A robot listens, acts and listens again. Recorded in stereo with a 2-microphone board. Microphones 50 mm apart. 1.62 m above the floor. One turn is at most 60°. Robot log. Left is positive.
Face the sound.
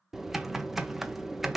cmd yaw -30
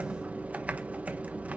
note: So it is at 145° right.
cmd yaw -60
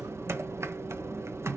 note: The typing on a keyboard is now 100° right.
cmd yaw -60
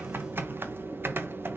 note: The typing on a keyboard is now 50° right.
cmd yaw -50
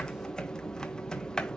note: The typing on a keyboard is now 15° left.
cmd yaw +15
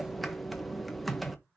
end: Facing the typing on a keyboard.